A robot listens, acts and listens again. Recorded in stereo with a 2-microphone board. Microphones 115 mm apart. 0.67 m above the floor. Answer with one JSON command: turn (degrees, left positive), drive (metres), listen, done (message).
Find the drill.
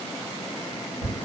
{"listen": true}
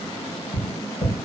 {"listen": true}
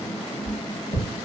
{"done": "I can't make out a drill to turn to."}